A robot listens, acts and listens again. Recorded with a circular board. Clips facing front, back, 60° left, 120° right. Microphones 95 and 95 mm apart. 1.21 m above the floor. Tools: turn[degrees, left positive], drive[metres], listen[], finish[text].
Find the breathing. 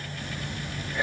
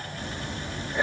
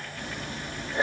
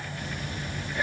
Thought: The breathing: 120° left.
Action: turn[120]
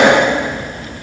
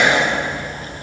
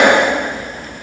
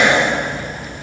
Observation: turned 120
Thought: The breathing is now 25° left.
Action: turn[25]
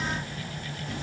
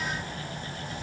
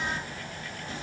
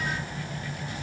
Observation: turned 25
Action: finish[Facing the breathing, 1 to 2 m away.]